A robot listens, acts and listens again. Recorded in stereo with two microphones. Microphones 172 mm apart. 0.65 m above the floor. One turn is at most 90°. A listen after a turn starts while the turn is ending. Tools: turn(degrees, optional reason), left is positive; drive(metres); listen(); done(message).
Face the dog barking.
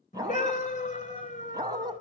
turn(degrees=-25, reason="The dog barking: about 25° right or 155° right.")
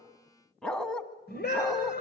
done("Found it: a dog barking, straight ahead, 2 to 4 m away.")